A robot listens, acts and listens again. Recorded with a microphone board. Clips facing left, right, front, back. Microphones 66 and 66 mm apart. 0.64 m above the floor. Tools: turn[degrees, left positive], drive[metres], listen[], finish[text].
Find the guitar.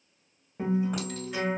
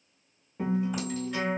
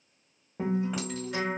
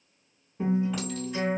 Thought: The guitar: 10° left.
Action: turn[10]
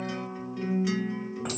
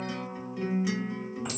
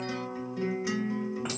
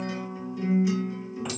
Action: finish[Facing the guitar.]